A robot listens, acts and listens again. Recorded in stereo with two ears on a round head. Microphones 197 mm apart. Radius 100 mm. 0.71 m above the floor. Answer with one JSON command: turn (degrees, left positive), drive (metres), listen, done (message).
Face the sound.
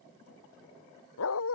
{"turn": 75}
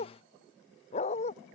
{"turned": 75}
{"turn": 30}
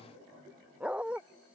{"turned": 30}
{"done": "Found it: a dog barking, straight ahead."}